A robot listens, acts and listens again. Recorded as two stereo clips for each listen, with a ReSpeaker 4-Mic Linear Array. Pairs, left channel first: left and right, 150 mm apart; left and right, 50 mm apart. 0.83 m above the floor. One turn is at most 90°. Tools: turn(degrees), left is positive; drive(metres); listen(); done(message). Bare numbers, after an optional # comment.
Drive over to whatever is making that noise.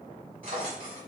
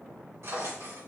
# The drawer: about 65° right or 115° right.
turn(-65)
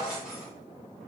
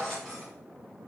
drive(1.0)
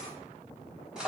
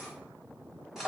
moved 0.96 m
drive(1.0)
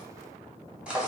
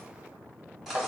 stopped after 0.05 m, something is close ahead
done("I am next to the drawer.")